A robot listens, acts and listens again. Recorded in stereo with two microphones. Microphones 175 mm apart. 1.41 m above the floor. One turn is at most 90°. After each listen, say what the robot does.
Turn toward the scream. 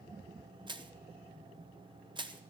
Keep listening.
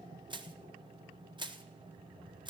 Keep listening.
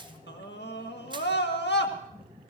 Turn 90° left.
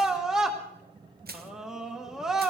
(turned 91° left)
Found it: a scream, straight ahead, 1 to 2 m away.